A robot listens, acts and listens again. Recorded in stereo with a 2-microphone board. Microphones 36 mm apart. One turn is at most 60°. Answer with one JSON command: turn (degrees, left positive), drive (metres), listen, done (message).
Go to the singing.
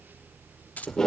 {"listen": true}
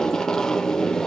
{"listen": true}
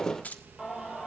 {"turn": -30}
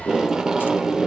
{"listen": true}
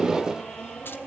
{"turn": 15}
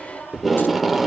{"listen": true}
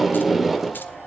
{"listen": true}
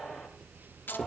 {"done": "I heard singing from this way, but can't make it out now. I did not reach it."}